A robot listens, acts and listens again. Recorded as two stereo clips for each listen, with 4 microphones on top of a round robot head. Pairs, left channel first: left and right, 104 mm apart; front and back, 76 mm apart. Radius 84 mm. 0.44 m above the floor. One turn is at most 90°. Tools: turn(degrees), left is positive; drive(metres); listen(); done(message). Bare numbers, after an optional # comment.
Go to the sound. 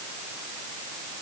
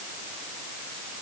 listen()
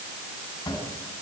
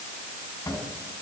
# The cupboard door: 45° left.
turn(45)
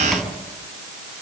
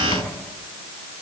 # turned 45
drive(1.0)
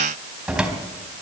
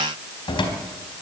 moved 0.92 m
drive(1.0)
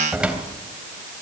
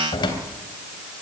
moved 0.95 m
# The cupboard door is now 10° right.
turn(-10)
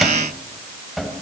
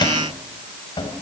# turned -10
drive(1.0)
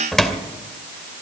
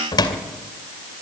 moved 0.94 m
drive(1.0)
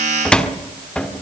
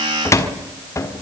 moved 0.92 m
# The cupboard door is now 15° left.
turn(15)
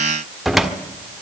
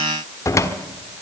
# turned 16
drive(1.0)
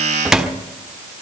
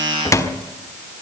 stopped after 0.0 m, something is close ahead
done("I am next to the cupboard door.")